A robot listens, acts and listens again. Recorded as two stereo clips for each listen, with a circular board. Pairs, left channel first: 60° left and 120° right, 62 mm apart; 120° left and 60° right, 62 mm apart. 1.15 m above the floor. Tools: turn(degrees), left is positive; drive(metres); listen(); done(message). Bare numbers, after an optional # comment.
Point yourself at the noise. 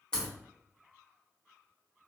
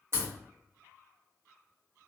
# The crack: 15° right.
turn(-15)
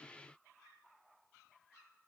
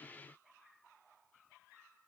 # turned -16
done("I heard a crack from this way, but can't make it out now.")